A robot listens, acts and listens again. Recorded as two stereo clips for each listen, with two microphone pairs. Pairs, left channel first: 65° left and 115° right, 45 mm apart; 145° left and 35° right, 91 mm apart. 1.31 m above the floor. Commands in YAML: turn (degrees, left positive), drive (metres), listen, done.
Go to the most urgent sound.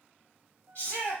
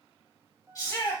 turn: 100
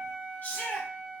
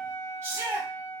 turn: 25
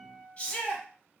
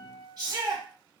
drive: 1.0
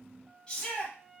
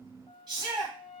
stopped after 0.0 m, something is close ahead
done: "Blocked. The shout is further on, straight ahead."